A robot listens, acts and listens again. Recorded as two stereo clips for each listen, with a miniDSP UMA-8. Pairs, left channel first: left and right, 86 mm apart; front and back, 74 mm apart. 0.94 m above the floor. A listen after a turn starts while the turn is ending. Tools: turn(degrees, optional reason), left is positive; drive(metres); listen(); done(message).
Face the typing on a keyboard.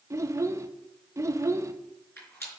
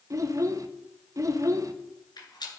listen()
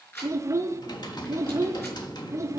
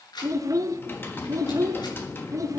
turn(degrees=60, reason="The typing on a keyboard: 60° left.")
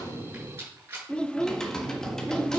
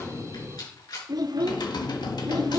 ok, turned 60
done("Found it: typing on a keyboard, straight ahead, 1 to 2 m away.")